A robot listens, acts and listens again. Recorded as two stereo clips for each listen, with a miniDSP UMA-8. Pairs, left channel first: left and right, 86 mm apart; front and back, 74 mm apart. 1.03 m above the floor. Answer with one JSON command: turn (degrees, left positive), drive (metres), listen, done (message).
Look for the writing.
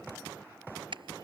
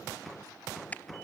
{"listen": true}
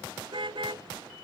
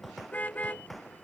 {"listen": true}
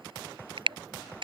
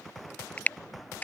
{"done": "I can't make out writing to turn to."}